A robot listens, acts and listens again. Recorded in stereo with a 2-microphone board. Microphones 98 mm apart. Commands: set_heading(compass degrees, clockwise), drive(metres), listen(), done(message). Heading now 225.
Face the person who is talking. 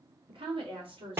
set_heading(290)
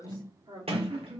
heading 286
set_heading(341)
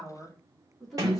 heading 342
done("Found it: a woman speaking, straight ahead, 1 to 2 m away.")